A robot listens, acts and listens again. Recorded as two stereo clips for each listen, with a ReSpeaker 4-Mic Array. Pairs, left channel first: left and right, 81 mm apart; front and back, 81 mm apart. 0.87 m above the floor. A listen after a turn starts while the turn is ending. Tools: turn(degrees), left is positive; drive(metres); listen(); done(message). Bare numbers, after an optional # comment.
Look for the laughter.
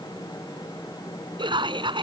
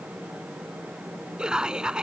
# The laughter: 100° right.
turn(-100)
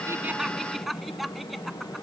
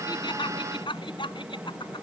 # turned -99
done("Found it: laughter, straight ahead.")